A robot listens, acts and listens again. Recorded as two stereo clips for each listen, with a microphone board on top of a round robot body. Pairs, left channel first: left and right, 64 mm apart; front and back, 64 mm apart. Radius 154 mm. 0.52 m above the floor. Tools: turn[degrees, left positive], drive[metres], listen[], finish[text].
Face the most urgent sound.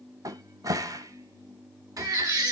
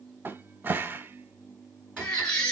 Thought: The baby crying: 80° right.
Action: turn[-80]
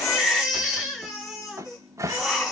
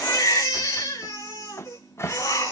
Thought: The baby crying is now 10° right.
Action: turn[-10]
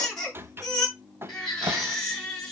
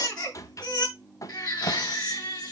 Action: finish[Found it: a baby crying, straight ahead, over 4 m away.]